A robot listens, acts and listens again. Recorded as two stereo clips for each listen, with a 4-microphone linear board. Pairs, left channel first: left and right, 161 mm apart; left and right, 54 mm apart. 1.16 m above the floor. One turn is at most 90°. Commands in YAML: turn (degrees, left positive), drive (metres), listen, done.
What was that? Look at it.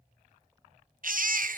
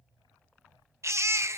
turn: -65
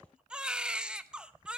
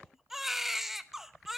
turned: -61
done: "Facing the baby crying."